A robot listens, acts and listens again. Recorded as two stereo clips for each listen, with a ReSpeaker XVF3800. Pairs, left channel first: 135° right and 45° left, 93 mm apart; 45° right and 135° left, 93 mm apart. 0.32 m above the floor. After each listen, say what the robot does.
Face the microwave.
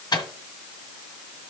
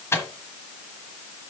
Turn 105° right.
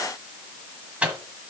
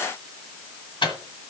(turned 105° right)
Turn 30° right.
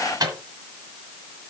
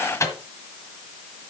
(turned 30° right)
Facing the microwave.